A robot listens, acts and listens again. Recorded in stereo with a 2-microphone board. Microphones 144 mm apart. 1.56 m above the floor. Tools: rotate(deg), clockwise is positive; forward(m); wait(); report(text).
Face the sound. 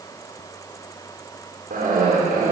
rotate(90)
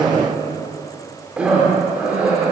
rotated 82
rotate(10)
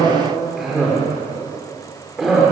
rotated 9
report("Facing the cough, over 4 m away.")